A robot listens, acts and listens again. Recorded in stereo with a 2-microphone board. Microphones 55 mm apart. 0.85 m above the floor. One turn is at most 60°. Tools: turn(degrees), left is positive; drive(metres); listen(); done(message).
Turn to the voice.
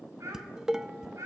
turn(degrees=-60)
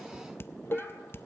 listen()
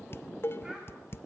listen()
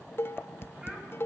done("I heard a child speaking, but can't make it out now. It was about 10° right or 50° right.")